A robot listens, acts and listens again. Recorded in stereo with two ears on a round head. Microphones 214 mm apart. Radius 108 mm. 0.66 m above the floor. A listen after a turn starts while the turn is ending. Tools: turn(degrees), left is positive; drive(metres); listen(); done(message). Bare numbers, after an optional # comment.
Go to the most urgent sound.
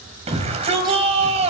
# The shout: about 25° right or 155° right.
turn(-25)
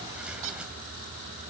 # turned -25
drive(1.0)
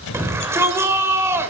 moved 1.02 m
# The shout is now 10° right.
turn(-10)
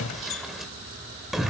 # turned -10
drive(1.0)
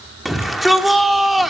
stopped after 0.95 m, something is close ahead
done("Arrived at the shout, straight ahead.")